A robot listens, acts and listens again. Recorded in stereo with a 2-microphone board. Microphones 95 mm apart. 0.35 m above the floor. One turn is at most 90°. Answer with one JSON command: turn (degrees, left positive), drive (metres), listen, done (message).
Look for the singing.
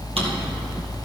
{"listen": true}
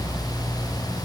{"listen": true}
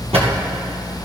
{"done": "I can't make out singing to turn to."}